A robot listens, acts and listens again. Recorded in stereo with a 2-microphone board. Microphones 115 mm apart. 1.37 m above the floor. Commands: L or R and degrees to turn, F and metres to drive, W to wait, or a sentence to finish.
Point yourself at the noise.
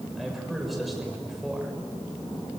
L30
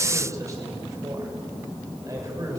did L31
R30
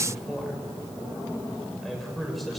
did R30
Facing the man speaking, over 4 m away.